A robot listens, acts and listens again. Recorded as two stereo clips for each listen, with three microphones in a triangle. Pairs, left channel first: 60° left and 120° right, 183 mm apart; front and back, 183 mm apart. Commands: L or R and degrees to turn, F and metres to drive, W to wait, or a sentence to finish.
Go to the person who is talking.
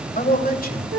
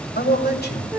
L25
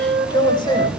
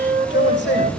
F1.0
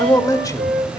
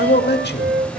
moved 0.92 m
R10
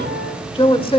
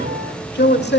F1.0
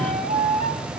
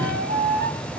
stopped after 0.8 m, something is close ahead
W
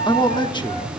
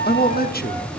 I am next to the man speaking.